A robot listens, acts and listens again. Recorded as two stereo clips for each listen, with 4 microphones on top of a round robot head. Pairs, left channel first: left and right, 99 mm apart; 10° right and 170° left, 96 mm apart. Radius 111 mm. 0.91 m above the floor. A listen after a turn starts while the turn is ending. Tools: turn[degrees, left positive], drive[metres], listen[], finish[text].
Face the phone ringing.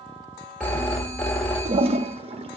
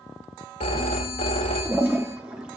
Thought: The phone ringing: 10° left.
Action: turn[10]
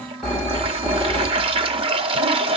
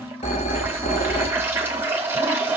Action: finish[Found it: a phone ringing, straight ahead.]